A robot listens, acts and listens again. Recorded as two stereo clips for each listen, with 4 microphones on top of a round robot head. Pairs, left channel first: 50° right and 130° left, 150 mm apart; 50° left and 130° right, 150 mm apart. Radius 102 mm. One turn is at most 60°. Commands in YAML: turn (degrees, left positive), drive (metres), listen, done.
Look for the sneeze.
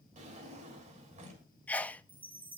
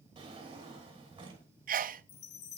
turn: -60
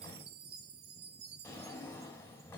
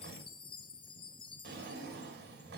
turn: -60
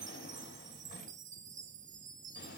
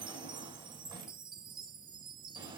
turn: -10
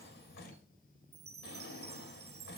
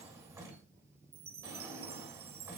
done: "Facing where the sneeze came from. I can't hear it now."